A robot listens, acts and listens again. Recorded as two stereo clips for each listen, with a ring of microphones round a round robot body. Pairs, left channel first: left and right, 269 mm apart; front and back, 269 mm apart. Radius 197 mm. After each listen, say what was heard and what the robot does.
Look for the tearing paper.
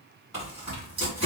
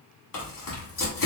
The tearing paper: 10° right. Turn 10° right.
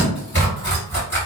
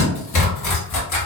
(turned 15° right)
Found it: tearing paper, straight ahead.